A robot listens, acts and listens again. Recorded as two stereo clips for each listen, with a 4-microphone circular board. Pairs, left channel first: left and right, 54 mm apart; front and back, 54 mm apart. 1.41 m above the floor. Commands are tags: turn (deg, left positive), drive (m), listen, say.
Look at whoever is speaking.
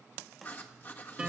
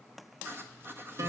<listen/>
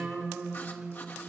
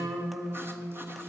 <listen/>
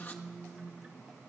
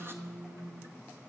<say>I can't make out anyone speaking to turn to.</say>